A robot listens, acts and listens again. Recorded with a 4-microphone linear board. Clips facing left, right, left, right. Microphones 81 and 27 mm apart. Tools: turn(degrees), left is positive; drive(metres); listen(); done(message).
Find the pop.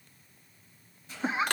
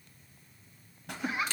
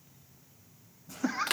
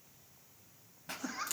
turn(degrees=-65)
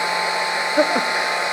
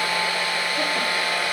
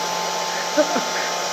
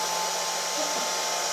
listen()
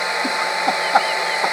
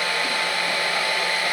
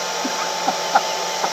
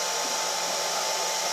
done("I heard a pop, but can't make it out now. It was about straight ahead or 50° right.")